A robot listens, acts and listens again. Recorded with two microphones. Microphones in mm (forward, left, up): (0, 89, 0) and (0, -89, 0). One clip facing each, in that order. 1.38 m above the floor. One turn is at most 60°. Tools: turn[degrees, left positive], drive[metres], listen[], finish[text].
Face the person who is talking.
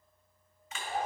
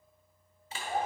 Action: listen[]
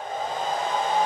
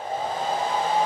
Action: listen[]
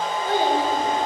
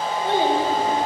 Thought: The child speaking: about 25° right or 155° right.
Action: turn[-25]
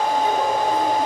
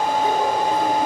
Action: listen[]
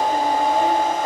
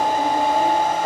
Action: listen[]
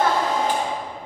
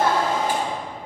Thought: The child speaking: about 35° right or 145° right.
Action: turn[-35]
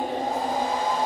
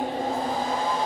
Thought: So it is at 115° right.
Action: turn[-60]
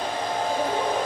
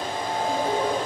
Thought: The child speaking is now 60° right.
Action: turn[-60]
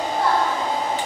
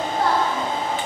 Action: finish[Facing the child speaking.]